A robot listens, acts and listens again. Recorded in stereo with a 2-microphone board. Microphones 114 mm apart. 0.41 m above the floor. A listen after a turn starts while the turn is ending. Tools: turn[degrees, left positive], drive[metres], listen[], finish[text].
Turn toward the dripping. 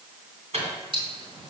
Thought: The dripping: about 50° right or 130° right.
Action: turn[-50]
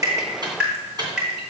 Action: finish[Found it: dripping, straight ahead.]